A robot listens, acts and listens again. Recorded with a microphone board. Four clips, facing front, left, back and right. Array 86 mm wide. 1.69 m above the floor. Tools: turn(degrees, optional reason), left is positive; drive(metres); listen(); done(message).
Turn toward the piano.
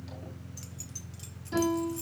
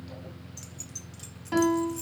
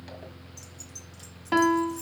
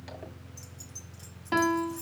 turn(degrees=-165, reason="The piano: 165° right.")
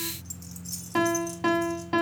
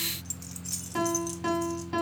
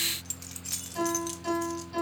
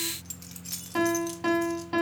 turn(degrees=-15, reason="The piano is now 15° right.")
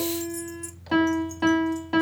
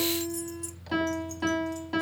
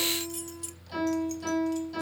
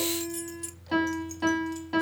done("Found it: a piano, straight ahead, 2 to 4 m away.")